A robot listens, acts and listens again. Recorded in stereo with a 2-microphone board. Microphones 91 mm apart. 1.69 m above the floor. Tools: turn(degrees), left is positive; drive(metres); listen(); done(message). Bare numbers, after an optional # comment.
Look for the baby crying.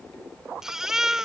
turn(-30)
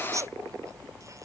# So it is at 145° right.
turn(-145)
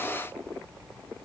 listen()
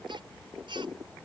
# The baby crying is now 60° right.
turn(-60)
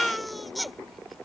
done("Found it: a baby crying, straight ahead.")